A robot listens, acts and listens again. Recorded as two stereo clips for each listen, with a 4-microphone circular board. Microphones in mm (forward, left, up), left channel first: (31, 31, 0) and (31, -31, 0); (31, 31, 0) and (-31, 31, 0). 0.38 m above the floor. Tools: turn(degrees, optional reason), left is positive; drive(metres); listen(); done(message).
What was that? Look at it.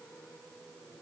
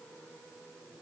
listen()
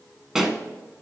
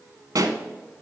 turn(degrees=-175, reason="The pop: 175° right.")
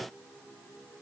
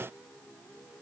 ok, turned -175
done("I heard a pop from this way, but can't make it out now.")